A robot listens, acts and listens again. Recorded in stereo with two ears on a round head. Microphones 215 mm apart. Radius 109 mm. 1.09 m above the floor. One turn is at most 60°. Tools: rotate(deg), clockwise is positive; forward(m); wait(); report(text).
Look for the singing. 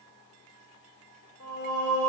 rotate(-45)
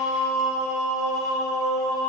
report("Found it: singing, straight ahead.")